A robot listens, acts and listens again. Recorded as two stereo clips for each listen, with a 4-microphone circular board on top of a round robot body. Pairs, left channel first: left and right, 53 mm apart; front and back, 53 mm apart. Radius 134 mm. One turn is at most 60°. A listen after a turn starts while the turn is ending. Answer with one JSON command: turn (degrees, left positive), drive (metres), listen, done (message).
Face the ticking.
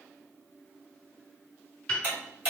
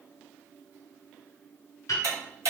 {"turn": -60}
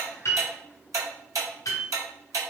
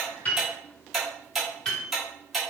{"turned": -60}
{"turn": -60}
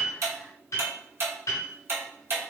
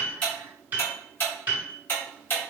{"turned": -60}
{"turn": -50}
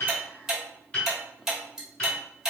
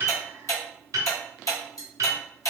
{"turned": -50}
{"turn": -10}
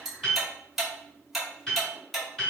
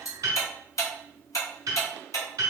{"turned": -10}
{"done": "Facing the ticking."}